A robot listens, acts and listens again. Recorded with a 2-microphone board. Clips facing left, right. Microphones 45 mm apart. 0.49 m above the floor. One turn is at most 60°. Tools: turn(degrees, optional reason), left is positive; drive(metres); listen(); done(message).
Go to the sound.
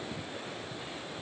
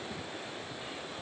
listen()
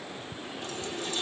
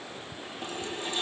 turn(degrees=-25, reason="The running tap: about 25° right or 155° right.")
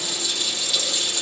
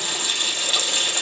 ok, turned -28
turn(degrees=-60, reason="So it is at 130° right.")
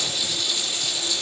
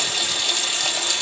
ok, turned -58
turn(degrees=-60, reason="The running tap is now 70° right.")
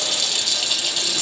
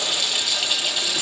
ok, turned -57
turn(degrees=-10, reason="The running tap is now 10° right.")
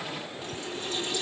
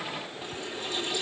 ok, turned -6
drive(metres=1.0)
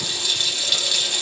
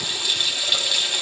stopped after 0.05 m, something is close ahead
turn(degrees=-10, reason="The running tap is now 10° right.")
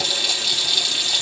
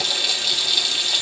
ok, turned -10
done("Blocked. The running tap is further on, straight ahead.")